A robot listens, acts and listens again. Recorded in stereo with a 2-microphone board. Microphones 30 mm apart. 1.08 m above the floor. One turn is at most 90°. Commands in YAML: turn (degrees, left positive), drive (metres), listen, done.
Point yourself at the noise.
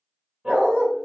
turn: -35
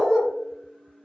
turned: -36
done: "Facing the dog barking, 2 to 4 m away."